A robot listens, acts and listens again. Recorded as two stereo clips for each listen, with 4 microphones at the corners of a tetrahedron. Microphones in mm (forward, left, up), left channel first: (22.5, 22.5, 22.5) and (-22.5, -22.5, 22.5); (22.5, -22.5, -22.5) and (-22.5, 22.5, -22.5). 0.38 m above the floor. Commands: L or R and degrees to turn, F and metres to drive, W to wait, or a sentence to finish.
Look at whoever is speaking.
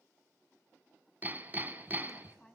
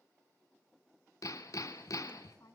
R35
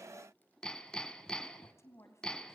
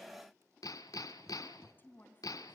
L10
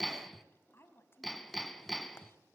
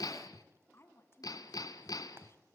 Found it: a woman speaking, straight ahead, 2 to 4 m away.